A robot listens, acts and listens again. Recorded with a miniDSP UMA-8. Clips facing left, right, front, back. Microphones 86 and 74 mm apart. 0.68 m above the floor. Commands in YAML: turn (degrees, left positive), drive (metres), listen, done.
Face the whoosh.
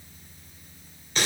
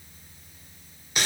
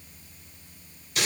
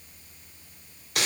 listen: true
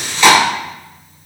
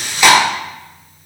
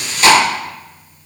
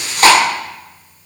listen: true
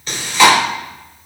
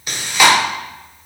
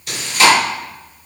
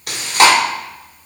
done: "I can't make out a whoosh, only chewing."